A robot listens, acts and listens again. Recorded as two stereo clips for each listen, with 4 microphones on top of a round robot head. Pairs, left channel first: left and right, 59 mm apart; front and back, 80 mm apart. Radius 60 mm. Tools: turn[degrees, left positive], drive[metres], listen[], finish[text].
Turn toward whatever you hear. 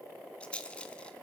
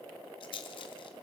Thought: The rattle: 20° left.
Action: turn[20]
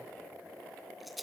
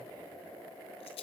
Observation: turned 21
Action: finish[Facing the rattle.]